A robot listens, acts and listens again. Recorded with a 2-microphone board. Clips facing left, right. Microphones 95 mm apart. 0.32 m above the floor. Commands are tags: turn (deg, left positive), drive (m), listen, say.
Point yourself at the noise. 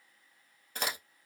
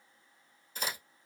<turn deg="90"/>
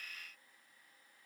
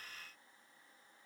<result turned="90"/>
<say>I heard a crack from this way, but can't make it out now.</say>